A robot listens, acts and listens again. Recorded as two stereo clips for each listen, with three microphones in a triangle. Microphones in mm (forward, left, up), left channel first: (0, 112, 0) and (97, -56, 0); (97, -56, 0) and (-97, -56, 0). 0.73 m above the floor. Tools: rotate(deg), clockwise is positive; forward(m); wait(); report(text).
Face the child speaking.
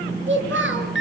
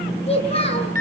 rotate(60)
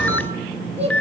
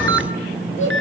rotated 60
report("Facing the child speaking, over 4 m away.")